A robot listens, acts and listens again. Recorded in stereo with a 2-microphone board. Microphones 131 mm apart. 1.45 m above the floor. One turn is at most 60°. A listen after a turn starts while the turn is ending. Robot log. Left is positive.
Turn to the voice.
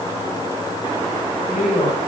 note: The woman speaking: about 70° left or 110° left.
cmd yaw +60
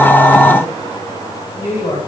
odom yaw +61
note: So it is at 50° left.
cmd yaw +50
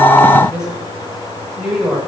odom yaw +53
end: Found it: a woman speaking, straight ahead, over 4 m away.